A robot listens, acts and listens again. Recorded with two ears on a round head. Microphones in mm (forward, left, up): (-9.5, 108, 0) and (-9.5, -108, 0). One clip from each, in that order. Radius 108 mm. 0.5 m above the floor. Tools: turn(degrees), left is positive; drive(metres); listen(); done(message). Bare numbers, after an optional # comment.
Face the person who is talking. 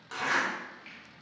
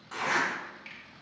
listen()
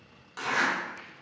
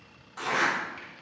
listen()
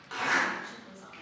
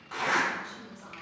# The woman speaking: about 50° left or 130° left.
turn(50)
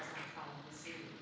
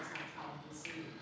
# So it is at 20° left.
turn(20)
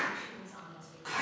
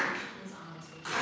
done("Found it: a woman speaking, straight ahead.")